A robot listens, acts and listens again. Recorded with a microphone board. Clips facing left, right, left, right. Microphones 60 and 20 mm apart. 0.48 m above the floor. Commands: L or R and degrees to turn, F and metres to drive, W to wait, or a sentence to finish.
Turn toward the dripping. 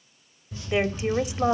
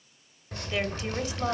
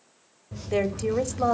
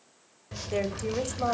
R60
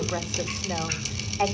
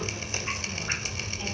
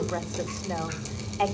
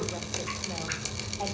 R40
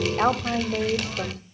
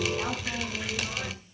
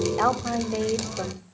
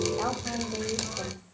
Facing the dripping, 2 to 4 m away.